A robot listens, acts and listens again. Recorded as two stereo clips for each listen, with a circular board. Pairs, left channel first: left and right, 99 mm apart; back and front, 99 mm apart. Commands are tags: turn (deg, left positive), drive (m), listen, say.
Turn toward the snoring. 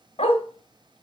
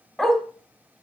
<listen/>
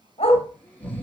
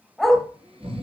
<turn deg="15"/>
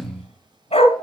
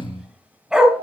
<turn deg="10"/>
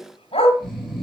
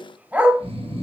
<say>Found it: snoring, straight ahead, 2 to 4 m away.</say>